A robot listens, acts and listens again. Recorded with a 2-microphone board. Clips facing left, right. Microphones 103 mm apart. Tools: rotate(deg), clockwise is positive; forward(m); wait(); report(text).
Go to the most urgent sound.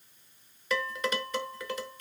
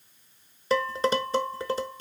wait()
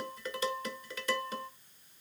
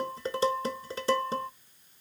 wait()
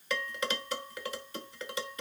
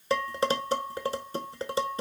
report("I can't make out anything urgent to turn to.")